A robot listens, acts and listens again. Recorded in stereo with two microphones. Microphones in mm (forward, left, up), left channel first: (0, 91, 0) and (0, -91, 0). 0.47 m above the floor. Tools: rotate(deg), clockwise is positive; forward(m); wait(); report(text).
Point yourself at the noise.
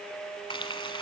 rotate(-30)
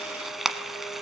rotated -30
report("Found it: frying, straight ahead.")